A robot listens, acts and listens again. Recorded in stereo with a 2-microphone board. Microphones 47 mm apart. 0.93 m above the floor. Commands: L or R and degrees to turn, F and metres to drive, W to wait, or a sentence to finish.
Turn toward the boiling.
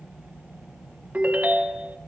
W
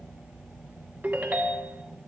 W
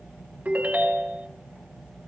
I can't make out boiling to turn to.